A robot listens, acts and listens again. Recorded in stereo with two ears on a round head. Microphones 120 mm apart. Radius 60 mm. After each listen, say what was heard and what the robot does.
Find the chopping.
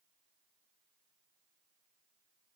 Keep listening.
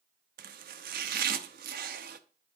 Turn 90° right.
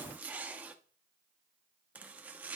So it is at 10° right. Turn 10° right.
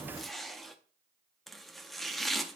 Facing the chopping.